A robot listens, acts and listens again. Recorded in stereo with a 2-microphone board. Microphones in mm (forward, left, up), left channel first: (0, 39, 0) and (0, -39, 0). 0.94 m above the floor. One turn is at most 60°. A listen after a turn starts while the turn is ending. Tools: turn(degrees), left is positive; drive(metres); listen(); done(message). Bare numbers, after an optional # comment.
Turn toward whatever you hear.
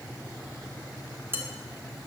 # The dishes clattering: about 30° right or 150° right.
turn(-30)
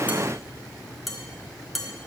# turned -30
done("Found it: dishes clattering, straight ahead.")